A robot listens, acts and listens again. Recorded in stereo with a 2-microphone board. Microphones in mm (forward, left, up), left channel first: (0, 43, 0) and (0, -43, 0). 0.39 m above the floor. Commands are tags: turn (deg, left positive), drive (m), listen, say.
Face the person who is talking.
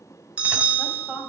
<turn deg="-30"/>
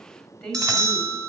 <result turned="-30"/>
<turn deg="15"/>
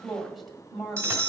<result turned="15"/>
<say>Found it: a woman speaking, straight ahead.</say>